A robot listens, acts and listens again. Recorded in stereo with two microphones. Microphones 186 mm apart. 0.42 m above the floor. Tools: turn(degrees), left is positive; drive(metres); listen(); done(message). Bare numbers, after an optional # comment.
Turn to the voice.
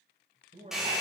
# The man speaking: about 45° right or 135° right.
turn(-45)
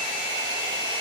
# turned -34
listen()
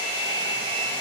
listen()
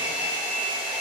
done("I heard a man speaking, but can't make it out now. It was about 10° right or 100° right.")